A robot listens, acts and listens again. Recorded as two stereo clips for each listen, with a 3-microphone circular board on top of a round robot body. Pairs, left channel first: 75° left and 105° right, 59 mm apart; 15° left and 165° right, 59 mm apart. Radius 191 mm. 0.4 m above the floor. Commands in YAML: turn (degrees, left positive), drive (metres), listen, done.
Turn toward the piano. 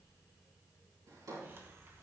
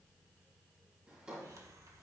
listen: true
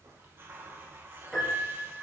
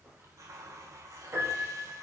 turn: 160
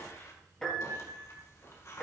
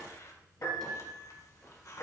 done: "Found it: a piano, straight ahead, over 4 m away."